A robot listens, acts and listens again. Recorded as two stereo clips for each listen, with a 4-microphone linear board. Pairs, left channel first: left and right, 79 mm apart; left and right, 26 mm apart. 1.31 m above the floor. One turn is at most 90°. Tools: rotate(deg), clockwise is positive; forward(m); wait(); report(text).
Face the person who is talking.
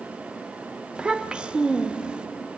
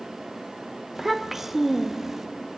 rotate(30)
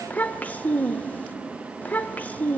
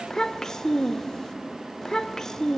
rotate(-20)
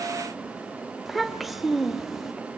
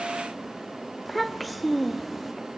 report("Facing the child speaking, under 1 m away.")